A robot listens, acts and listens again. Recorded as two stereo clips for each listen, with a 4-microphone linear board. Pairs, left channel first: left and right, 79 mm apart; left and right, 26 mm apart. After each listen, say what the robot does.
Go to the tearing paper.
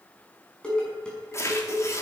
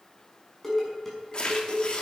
Turn 40° left.
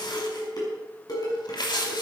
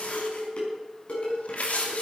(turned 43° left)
Turn 95° left.
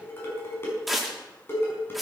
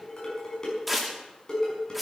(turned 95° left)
Drive 1.0 m forward.
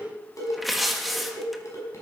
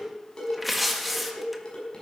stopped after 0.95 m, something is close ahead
Arrived at the tearing paper, straight ahead.